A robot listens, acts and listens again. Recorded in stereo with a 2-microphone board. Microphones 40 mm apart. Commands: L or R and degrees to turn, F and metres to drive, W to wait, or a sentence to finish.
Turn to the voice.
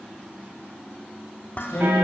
L90
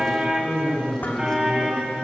L10
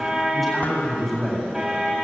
Facing the man speaking.